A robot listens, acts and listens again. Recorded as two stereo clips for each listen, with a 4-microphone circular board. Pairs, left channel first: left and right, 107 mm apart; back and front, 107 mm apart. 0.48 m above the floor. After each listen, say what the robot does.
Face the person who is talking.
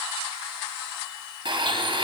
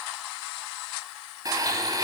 Keep listening.
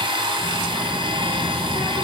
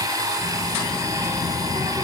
Turn 115° left.
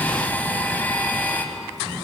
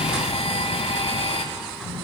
Turn 30° right.
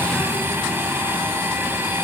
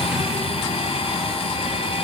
Turn 10° left.
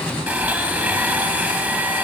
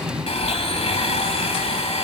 Found it: a child speaking, straight ahead, over 4 m away.